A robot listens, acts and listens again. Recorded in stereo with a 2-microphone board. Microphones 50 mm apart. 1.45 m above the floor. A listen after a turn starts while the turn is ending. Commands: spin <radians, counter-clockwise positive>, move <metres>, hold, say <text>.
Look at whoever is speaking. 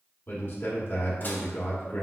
spin 0.79
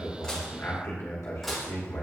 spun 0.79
spin 1.57
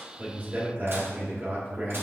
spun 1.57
spin -0.70
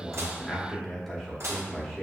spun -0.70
say Found it: a man speaking, straight ahead.